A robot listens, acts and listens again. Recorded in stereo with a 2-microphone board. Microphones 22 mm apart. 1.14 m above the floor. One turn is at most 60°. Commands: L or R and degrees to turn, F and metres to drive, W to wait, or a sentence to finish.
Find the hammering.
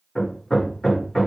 L20
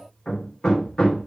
L60
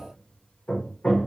L60
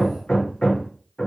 L35
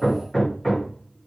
L15
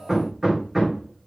Facing the hammering.